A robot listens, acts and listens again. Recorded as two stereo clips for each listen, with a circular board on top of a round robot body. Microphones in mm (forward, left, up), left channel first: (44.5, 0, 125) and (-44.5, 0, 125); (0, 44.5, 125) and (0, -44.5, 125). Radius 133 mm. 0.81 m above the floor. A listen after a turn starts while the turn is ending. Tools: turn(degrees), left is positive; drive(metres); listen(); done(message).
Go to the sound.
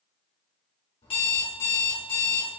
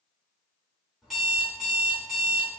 drive(metres=1.0)
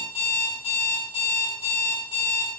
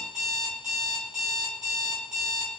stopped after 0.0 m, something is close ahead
done("Blocked. The alarm clock is further on, straight ahead.")